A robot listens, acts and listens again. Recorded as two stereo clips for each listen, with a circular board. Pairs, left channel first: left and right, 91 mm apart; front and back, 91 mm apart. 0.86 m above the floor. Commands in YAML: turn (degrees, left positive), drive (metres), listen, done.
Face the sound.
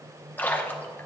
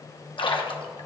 turn: 20
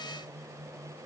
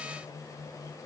done: "Facing where the splash came from. I can't hear it now."